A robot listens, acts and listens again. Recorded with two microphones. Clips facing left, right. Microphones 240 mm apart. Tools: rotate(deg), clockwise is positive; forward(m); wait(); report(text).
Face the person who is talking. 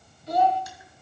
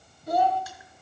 rotate(50)
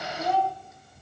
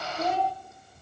rotate(80)
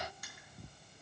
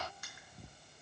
wait()
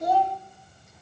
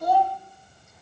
rotate(-20)
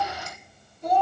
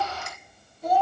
report("Found it: a child speaking, straight ahead.")